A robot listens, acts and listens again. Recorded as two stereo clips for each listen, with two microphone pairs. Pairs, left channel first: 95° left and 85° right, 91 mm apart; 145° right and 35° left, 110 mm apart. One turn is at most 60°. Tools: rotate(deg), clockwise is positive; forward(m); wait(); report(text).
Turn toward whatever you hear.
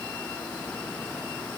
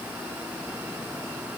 wait()
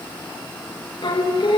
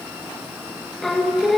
rotate(-60)
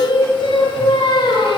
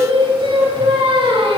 rotate(-60)
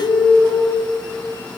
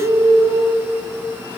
rotate(-10)
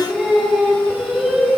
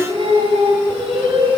report("Facing the singing.")